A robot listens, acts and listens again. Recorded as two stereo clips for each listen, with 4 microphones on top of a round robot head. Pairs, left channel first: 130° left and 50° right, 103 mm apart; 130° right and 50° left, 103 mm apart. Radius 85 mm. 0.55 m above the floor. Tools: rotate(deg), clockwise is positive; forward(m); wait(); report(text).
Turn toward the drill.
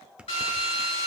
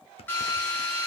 rotate(-160)
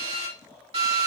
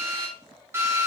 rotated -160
rotate(20)
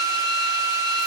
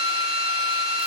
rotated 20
report("Found it: a drill, straight ahead, over 4 m away.")